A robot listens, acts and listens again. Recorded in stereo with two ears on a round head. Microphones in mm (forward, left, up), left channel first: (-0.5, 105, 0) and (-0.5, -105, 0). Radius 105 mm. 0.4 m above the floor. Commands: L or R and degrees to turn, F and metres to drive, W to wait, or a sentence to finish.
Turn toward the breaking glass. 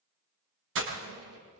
R55
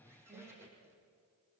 W
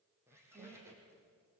I heard breaking glass, but can't make it out now. It was about straight ahead or 70° right.